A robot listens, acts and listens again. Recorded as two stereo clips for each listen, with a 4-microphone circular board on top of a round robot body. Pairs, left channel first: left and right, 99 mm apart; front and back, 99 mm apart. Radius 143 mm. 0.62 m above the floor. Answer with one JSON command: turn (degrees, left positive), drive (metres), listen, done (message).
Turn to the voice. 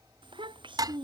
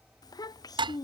{"turn": -50}
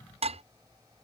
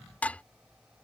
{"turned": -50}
{"listen": true}
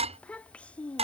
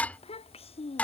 {"turn": 10}
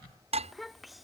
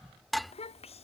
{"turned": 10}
{"done": "Found it: a child speaking, straight ahead."}